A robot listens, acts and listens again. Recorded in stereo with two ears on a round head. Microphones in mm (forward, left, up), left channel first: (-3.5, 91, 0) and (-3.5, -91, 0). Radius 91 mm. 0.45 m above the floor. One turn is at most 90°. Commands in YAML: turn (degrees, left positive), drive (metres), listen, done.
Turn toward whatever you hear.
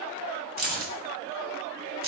turn: -45
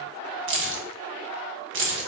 turn: -80
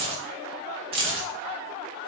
turn: -30
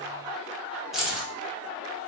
done: "Found it: keys jangling, straight ahead, 1 to 2 m away."